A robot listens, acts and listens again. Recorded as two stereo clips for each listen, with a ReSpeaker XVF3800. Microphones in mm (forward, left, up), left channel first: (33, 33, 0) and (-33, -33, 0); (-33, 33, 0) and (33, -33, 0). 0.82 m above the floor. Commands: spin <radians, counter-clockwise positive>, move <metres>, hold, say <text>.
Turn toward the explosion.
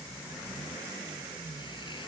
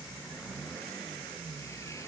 hold
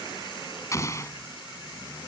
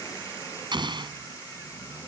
spin -0.17
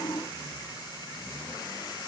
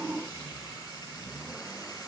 say I heard an explosion from this way, but can't make it out now.